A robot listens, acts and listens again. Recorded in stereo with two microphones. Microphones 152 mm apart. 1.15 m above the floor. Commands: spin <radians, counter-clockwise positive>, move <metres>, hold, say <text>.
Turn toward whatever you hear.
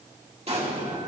spin -0.79
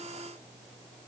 hold
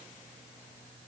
say I heard an explosion, but can't make it out now. It was about straight ahead or 90° right.